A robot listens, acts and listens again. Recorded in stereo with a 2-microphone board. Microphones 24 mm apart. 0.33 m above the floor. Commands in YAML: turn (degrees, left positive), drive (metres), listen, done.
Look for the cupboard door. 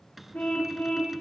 turn: -30
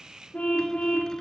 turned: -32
listen: true
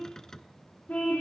turn: 25
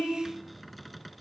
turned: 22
done: "Found it: a cupboard door, straight ahead."